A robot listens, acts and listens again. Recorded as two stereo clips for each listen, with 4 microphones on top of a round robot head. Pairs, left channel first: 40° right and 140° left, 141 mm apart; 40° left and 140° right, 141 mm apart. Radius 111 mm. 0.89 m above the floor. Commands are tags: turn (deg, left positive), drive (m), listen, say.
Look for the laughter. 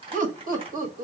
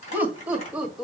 <turn deg="135"/>
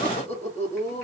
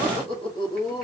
<turn deg="-15"/>
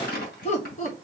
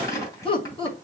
<turn deg="-10"/>
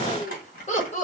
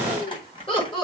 <turn deg="-10"/>
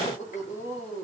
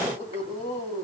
<turn deg="-10"/>
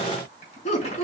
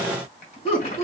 <say>Found it: laughter, straight ahead.</say>